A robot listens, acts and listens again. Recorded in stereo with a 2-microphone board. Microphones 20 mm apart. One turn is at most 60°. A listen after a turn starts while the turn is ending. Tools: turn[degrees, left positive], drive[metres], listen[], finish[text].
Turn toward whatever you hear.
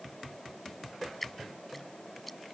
Action: turn[30]
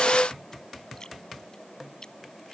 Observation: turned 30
Thought: So it is at 145° left.
Action: turn[60]
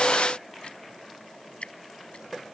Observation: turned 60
Thought: The dripping is now 110° left.
Action: turn[60]
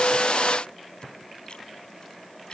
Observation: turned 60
Thought: Nothing new. It was at 50° left.
Action: turn[50]
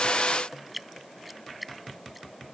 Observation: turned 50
Action: finish[Found it: dripping, straight ahead.]